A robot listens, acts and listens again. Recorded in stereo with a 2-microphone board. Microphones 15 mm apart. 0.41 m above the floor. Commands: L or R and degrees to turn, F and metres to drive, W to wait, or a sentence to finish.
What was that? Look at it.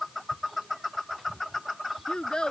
L75
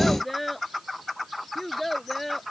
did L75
L10
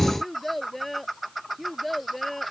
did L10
Facing the child speaking.